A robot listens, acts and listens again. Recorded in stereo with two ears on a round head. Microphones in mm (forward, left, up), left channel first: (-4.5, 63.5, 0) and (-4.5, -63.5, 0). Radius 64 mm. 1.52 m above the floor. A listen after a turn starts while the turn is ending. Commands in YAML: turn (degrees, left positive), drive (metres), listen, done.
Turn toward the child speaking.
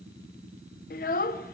turn: 65
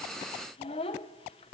turn: 40
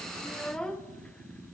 done: "Found it: a child speaking, straight ahead, under 1 m away."